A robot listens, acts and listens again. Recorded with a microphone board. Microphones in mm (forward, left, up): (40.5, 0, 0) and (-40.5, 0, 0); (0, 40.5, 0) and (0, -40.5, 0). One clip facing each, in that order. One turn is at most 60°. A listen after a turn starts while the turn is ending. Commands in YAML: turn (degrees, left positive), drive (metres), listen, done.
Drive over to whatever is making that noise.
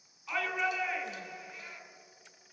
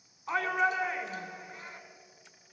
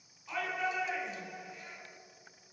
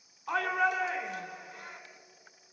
turn: -60
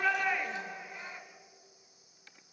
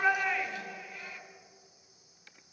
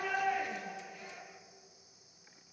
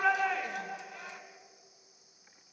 turn: -60
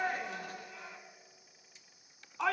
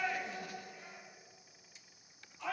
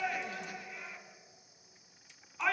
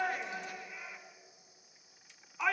turn: -10
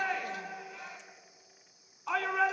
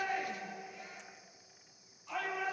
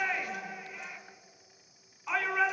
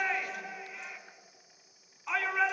drive: 1.0
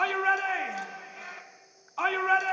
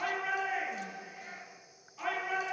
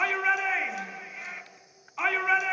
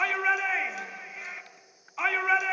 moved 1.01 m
drive: 1.0
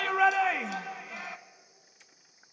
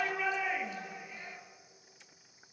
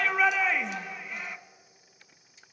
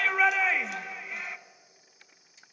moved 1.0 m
drive: 1.0
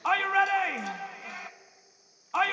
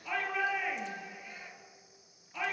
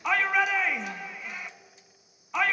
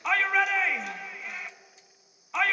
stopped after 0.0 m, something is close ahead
done: "I am next to the shout."